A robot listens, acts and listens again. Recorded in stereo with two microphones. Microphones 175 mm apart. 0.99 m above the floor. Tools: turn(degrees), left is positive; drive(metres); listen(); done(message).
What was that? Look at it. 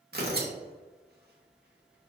turn(degrees=-65)
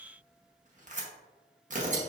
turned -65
turn(degrees=-50)
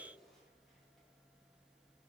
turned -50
listen()
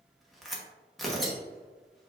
done("Facing the tearing paper, under 1 m away.")